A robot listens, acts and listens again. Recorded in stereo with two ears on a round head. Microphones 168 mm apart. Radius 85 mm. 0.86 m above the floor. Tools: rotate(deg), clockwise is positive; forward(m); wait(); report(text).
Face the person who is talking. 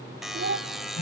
rotate(65)
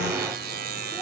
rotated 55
wait()
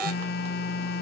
wait()
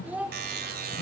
rotate(10)
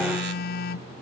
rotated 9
wait()
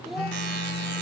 wait()
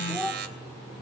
report("Found it: a child speaking, straight ahead, 1 to 2 m away.")